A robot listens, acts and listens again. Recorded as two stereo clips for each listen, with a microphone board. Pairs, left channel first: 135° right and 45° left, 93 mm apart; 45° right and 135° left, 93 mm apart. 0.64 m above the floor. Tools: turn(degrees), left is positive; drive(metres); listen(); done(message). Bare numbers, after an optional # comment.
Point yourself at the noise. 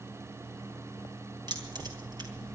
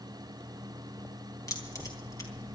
done("Found it: keys jangling, straight ahead.")